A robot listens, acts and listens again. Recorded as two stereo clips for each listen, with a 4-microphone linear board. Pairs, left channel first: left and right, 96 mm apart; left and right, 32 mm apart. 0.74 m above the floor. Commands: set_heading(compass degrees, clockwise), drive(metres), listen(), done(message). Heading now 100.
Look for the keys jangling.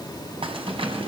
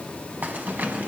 set_heading(190)
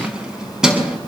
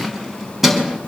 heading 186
done("Found it: keys jangling, straight ahead.")